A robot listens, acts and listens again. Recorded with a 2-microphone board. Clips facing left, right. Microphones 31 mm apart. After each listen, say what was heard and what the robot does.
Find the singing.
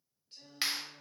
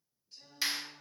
The singing: about 55° left or 125° left. Turn 55° left.
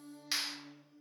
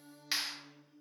So it is at 60° left. Turn 60° left.
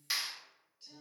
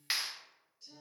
The singing is now 35° left. Turn 35° left.
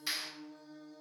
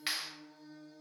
The singing is now 25° left. Turn 25° left.
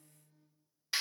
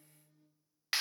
The singing is now 15° right. Turn 15° right.
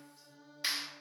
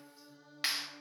Found it: singing, straight ahead, 2 to 4 m away.